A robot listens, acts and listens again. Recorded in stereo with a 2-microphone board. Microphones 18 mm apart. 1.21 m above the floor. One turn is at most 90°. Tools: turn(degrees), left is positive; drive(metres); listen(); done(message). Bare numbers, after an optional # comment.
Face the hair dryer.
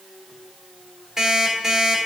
listen()
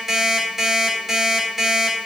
listen()
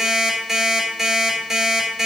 done("I can't make out a hair dryer to turn to.")